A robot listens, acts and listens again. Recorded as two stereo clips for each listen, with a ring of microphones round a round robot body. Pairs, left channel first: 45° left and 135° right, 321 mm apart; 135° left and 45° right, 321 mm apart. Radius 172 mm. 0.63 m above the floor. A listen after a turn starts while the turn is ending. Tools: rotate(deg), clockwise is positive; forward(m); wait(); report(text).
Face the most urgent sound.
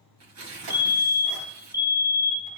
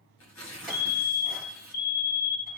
rotate(-145)
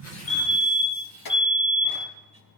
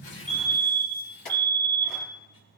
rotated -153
rotate(10)
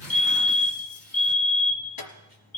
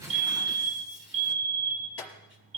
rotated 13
report("Found it: a fire alarm, straight ahead.")